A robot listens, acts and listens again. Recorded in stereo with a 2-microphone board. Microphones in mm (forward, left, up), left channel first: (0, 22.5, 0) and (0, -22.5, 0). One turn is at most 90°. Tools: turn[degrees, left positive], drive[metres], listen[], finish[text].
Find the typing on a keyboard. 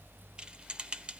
Thought: The typing on a keyboard: about 25° right or 155° right.
Action: turn[-25]
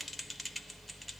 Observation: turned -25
Action: finish[Found it: typing on a keyboard, straight ahead, under 1 m away.]